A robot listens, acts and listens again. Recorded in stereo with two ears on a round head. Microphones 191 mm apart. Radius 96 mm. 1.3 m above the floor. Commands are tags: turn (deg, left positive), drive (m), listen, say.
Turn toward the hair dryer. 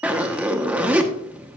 <listen/>
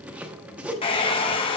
<turn deg="25"/>
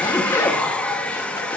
<say>Found it: a hair dryer, straight ahead, under 1 m away.</say>